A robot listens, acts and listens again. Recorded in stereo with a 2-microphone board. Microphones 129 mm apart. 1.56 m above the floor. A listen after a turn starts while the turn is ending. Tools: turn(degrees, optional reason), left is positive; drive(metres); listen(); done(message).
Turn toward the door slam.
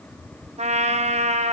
listen()
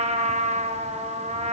listen()
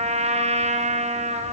done("I can't make out a door slam to turn to.")